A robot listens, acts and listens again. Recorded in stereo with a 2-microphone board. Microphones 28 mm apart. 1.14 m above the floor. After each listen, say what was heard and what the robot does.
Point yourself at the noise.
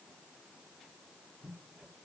Keep listening.
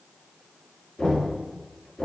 The knocking: about 35° left or 145° left. Turn 35° left.
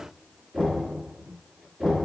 Facing the knocking, 2 to 4 m away.